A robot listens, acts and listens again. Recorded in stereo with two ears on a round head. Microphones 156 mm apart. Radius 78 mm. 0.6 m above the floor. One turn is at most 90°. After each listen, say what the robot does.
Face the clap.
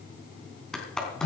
Turn 30° left.
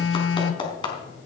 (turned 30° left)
Turn 90° left.
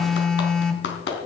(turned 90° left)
Turn 70° left.
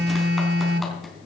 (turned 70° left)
Found it: a clap, straight ahead, 2 to 4 m away.